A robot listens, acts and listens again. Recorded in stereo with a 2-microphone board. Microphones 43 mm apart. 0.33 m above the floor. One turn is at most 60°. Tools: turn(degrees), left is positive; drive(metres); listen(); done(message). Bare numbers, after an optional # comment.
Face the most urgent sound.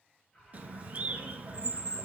# The alarm: about 15° left or 165° left.
turn(15)
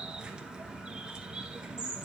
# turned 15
listen()
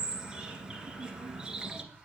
done("Found it: an alarm, straight ahead, over 4 m away.")